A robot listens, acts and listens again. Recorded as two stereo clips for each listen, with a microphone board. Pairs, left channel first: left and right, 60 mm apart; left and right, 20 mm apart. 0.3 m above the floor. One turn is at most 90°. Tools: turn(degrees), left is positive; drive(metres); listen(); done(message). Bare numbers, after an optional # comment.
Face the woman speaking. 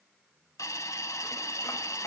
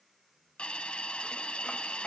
listen()
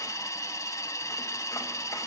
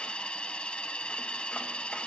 listen()
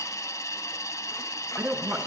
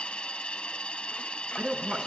# The woman speaking: about 20° right or 160° right.
turn(-20)
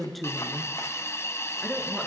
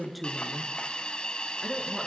done("Found it: a woman speaking, straight ahead, 2 to 4 m away.")